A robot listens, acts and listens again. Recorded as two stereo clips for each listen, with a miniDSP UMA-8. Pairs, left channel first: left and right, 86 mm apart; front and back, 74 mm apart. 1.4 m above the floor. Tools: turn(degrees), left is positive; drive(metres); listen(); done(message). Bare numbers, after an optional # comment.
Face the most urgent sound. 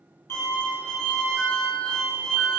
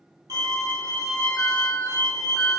# The alarm: 75° right.
turn(-75)
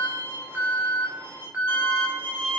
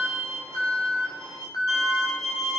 # The alarm is now 20° right.
turn(-20)
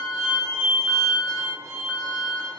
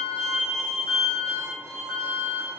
done("Found it: an alarm, straight ahead, 1 to 2 m away.")